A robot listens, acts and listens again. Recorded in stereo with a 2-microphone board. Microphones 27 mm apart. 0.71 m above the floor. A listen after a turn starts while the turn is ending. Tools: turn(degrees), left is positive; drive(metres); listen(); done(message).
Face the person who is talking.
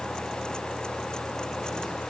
listen()
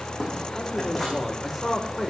turn(degrees=-30)
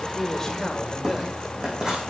listen()
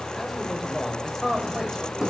turn(degrees=-30)
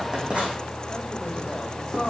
turn(degrees=20)
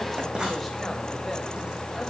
listen()
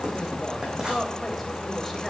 listen()
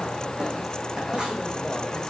done("Facing where the man speaking came from. I can't hear it now.")